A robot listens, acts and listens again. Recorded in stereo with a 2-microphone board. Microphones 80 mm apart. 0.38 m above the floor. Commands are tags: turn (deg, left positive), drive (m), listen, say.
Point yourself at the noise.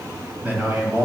<turn deg="-30"/>
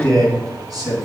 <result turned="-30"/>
<turn deg="-120"/>
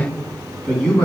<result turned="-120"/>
<turn deg="10"/>
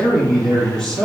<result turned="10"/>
<turn deg="10"/>
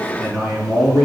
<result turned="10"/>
<say>Found it: a man speaking, straight ahead.</say>